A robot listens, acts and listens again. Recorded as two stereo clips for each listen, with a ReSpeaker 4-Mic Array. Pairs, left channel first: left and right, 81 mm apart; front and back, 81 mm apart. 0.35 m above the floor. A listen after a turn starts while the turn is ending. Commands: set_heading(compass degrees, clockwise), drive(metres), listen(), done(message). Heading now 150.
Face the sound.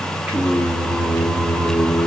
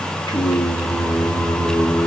set_heading(190)
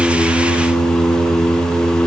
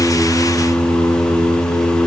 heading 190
set_heading(210)
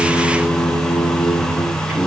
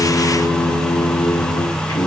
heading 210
set_heading(220)
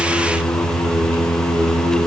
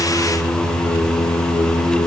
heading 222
set_heading(232)
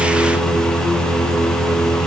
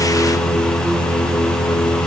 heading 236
done("Facing the singing, 2 to 4 m away.")